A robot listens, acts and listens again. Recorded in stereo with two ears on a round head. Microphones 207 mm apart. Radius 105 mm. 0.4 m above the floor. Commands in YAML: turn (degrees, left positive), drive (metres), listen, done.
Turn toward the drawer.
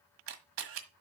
listen: true
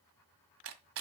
listen: true
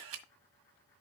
done: "I can't make out a drawer to turn to."